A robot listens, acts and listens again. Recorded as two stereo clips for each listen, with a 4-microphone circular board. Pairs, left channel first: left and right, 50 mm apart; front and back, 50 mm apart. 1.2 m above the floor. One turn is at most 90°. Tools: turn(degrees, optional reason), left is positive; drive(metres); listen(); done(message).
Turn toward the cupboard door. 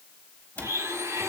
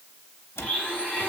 turn(degrees=30, reason="The cupboard door: 30° left.")
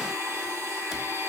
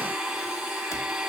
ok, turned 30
turn(degrees=-10, reason="The cupboard door is now 10° right.")
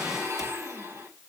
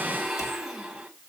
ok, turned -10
listen()
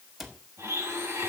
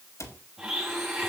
done("Found it: a cupboard door, straight ahead, 2 to 4 m away.")